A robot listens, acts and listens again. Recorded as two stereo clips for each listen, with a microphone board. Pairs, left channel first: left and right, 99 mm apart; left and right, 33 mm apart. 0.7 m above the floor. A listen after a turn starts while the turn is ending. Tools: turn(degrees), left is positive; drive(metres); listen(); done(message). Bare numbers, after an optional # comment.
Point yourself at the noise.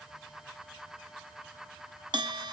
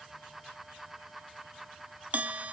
# The bell: about 50° right or 130° right.
turn(-50)
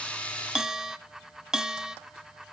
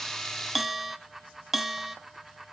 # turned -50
done("Found it: a bell, straight ahead.")